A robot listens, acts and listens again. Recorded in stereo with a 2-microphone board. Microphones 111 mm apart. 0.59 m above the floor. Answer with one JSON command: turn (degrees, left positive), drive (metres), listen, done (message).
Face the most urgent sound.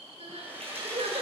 {"turn": -70}
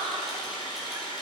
{"turn": -35}
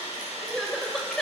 {"done": "Facing the crying."}